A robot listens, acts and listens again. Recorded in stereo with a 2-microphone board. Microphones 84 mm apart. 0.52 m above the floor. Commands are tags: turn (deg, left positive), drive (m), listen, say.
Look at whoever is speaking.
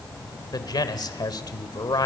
<turn deg="55"/>
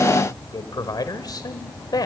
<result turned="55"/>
<turn deg="60"/>
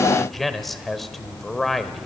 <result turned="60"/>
<say>Found it: a man speaking, straight ahead, 1 to 2 m away.</say>